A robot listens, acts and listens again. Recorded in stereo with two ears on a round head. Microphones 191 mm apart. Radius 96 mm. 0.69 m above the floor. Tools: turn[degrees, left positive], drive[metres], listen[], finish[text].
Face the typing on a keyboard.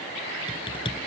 Thought: The typing on a keyboard: about 25° left or 155° left.
Action: turn[25]
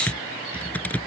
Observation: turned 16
Action: finish[Facing the typing on a keyboard.]